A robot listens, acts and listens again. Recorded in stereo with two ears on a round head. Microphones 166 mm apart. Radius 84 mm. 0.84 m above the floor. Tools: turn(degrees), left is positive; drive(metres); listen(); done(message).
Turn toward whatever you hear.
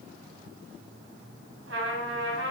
turn(degrees=-70)
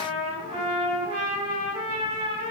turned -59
turn(degrees=-30)
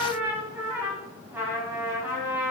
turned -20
turn(degrees=-10)
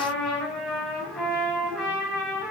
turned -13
done("Facing the trumpet.")